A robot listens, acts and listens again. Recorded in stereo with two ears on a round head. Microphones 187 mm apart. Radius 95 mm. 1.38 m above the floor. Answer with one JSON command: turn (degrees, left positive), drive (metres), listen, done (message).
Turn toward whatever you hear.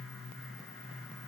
{"listen": true}
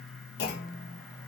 {"turn": 55}
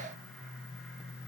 {"listen": true}
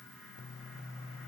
{"done": "I heard a clunk, but can't make it out now. It was about straight ahead or 70° left."}